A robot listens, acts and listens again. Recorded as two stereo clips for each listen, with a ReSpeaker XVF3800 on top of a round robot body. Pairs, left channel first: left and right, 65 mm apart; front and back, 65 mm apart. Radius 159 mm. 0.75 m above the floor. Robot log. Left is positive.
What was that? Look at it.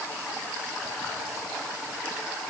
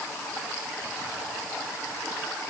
cmd idle
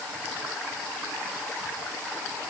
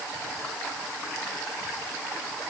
cmd idle
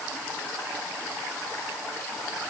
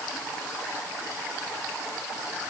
end: I can't make out anything.